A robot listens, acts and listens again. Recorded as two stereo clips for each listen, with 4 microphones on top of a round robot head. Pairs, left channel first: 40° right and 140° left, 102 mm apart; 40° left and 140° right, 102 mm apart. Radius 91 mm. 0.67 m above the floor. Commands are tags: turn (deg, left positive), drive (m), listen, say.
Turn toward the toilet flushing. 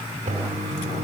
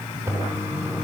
<turn deg="155"/>
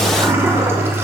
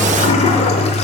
<turn deg="70"/>
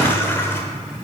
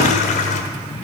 <turn deg="30"/>
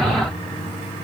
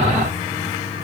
<say>Facing the toilet flushing, under 1 m away.</say>